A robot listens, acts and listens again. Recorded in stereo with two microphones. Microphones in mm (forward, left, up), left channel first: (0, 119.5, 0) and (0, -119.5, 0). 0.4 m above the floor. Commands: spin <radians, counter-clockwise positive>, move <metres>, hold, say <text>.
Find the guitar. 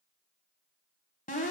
hold
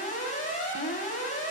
hold
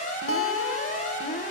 spin 1.22
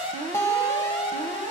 spin 0.17
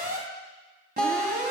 say Found it: a guitar, straight ahead, under 1 m away.